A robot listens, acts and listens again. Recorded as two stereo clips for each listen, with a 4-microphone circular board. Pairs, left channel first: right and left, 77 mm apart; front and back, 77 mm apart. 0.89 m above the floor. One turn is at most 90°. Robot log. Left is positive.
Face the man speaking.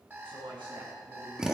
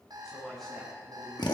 note: The man speaking: 90° left.
cmd yaw +90
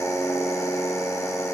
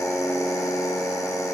cmd idle
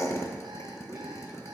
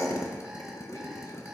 cmd idle
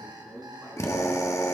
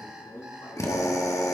note: The man speaking is now 30° left.
cmd yaw +30
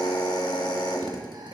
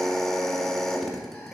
cmd idle
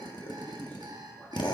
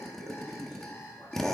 cmd idle
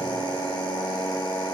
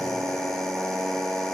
end: I heard a man speaking from this way, but can't make it out now.